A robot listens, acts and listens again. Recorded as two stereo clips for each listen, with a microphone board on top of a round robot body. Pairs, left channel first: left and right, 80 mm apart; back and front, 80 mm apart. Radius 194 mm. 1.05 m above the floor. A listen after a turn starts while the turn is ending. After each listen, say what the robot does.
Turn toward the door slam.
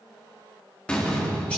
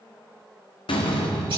Turn 170° left.
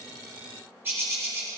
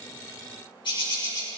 I heard a door slam from this way, but can't make it out now.